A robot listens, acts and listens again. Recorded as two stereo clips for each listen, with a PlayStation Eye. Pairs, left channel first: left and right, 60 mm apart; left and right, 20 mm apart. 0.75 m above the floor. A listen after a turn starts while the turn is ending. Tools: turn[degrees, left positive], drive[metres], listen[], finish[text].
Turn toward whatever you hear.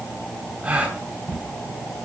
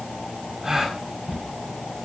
Thought: The gasp: about 25° right or 155° right.
Action: turn[-25]
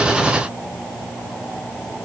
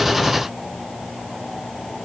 Action: listen[]
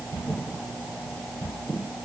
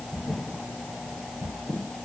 Action: finish[I heard a gasp, but can't make it out now. It was about straight ahead or 130° right.]